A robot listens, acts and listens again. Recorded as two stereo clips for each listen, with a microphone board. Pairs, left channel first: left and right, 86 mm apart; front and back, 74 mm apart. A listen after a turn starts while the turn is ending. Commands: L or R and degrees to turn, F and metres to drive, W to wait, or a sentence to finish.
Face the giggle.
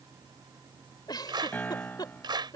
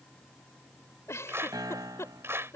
L50
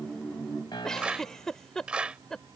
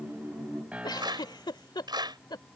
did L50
Facing the giggle.